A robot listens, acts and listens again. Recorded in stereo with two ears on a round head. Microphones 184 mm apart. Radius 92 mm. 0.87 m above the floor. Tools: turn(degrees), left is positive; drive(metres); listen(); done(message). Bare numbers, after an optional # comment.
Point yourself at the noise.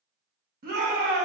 # The shout: about 50° right or 130° right.
turn(-50)
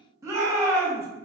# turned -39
# So it is at 15° right.
turn(-15)
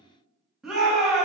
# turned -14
done("Facing the shout.")